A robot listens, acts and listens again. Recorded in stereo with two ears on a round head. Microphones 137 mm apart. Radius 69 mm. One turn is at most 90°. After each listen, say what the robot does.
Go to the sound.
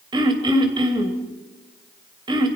Turn 30° right.
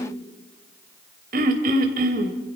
Turn 90° right.
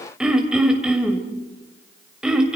Drive 1.0 m forward.
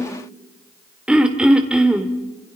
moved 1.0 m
Drive 1.0 m forward.
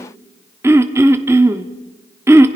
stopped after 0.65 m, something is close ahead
Turn 15° right.
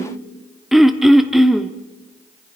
I am next to the throat clearing.